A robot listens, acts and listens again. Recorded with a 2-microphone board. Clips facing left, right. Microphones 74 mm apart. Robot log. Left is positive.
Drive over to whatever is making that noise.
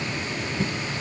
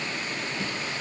cmd idle
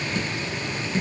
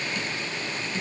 note: The dripping: about 40° left or 140° left.
cmd yaw +40
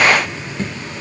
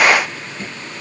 note: So it is at 100° left.
cmd yaw +100
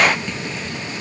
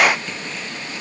cmd fwd 1.0
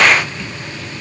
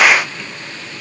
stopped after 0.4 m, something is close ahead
cmd idle
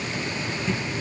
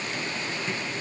end: Blocked. The dripping is further on, straight ahead.